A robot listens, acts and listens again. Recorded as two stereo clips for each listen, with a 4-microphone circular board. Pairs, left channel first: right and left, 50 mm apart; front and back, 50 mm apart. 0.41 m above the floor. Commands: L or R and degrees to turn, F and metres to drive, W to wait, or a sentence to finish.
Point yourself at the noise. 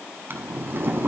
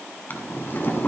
L45
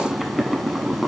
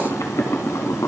Facing the boiling.